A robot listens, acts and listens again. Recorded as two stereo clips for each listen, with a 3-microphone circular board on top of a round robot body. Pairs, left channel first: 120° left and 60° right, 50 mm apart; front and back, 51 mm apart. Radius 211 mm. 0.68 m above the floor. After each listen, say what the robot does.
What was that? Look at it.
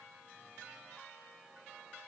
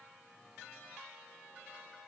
Keep listening.
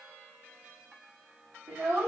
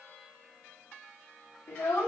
Turn 25° right.
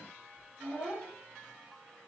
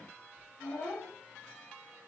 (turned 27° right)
Turn 25° left.
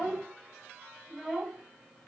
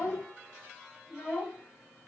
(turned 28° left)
Turn 25° left.
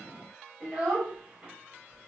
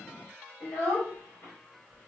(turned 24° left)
Facing the child speaking.